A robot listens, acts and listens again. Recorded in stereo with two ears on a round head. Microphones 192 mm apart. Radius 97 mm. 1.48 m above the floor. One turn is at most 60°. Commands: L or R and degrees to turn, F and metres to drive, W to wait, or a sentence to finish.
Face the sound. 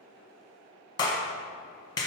L15
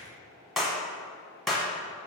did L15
Found it: a clap, straight ahead.